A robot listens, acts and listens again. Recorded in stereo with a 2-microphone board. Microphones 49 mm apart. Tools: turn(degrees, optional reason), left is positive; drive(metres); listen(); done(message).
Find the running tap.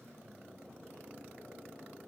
listen()
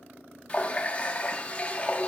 turn(degrees=25, reason="The running tap: about 25° left or 155° left.")
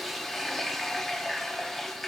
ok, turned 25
done("Facing the running tap, under 1 m away.")